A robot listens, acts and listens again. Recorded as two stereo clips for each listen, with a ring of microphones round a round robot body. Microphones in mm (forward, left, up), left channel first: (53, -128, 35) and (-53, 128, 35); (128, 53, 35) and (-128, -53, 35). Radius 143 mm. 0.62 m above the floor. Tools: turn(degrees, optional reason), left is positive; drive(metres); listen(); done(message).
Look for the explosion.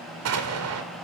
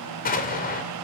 turn(degrees=80, reason="The explosion: 80° left.")
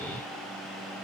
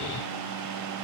done("Facing where the explosion came from. I can't hear it now.")